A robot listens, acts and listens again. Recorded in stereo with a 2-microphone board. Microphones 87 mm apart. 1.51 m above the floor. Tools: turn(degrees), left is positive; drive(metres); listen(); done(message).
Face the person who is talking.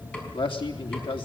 turn(degrees=90)
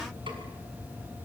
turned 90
listen()
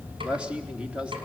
turn(degrees=-10)
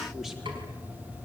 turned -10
listen()
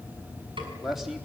done("Found it: a man speaking, straight ahead, 2 to 4 m away.")